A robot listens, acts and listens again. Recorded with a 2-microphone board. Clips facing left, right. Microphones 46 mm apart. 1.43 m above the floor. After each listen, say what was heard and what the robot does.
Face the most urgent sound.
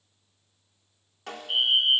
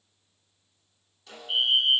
Turn 30° left.
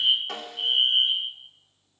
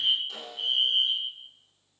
So it is at 145° left. Turn 145° left.
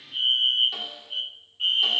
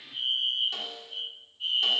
The fire alarm is now 70° left. Turn 70° left.
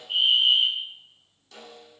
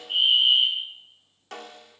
Found it: a fire alarm, straight ahead, 2 to 4 m away.